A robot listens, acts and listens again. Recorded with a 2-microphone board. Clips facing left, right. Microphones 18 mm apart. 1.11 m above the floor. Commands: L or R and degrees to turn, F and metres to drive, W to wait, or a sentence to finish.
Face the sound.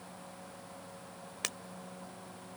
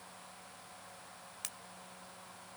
L35
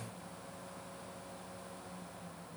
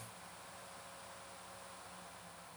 W
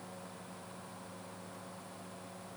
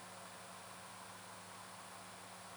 I heard breaking glass, but can't make it out now. It was about straight ahead or 110° left.